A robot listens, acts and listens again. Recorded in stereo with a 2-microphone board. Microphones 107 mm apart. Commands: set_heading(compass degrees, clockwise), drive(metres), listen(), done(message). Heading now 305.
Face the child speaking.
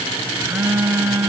listen()
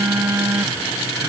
listen()
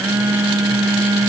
done("I can't make out a child speaking, only a phone buzzing.")